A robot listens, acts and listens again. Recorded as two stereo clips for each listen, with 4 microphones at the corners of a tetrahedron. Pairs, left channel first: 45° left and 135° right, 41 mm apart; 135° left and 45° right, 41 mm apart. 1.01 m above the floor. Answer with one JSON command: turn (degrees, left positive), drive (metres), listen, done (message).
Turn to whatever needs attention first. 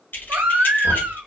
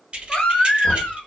{"turn": -150}
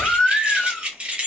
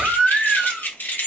{"done": "Facing the baby crying, under 1 m away."}